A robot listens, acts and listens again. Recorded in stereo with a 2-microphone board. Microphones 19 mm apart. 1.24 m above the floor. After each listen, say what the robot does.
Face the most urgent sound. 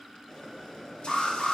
Turn 70° left.
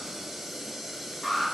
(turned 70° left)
Turn 30° left.
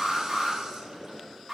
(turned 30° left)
Facing the alarm.